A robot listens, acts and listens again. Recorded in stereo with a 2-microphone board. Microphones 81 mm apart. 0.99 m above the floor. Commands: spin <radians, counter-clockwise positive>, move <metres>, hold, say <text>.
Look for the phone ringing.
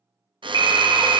spin 1.05
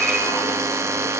say Found it: a phone ringing, straight ahead, 2 to 4 m away.